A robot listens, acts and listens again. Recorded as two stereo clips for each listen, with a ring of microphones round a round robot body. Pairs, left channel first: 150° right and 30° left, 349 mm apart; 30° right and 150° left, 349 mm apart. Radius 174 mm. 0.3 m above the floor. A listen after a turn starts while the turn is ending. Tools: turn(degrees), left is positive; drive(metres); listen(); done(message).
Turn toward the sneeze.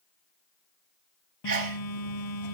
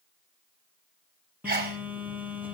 turn(degrees=90)
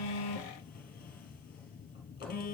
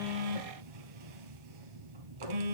done("Facing where the sneeze came from. I can't hear it now.")